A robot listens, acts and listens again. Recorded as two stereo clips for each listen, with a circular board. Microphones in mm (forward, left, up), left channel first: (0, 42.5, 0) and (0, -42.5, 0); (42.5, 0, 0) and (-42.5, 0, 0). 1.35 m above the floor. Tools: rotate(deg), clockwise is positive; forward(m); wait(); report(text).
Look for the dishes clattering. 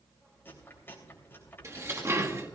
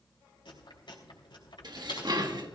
rotate(150)
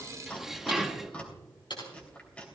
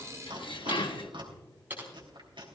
report("Facing the dishes clattering.")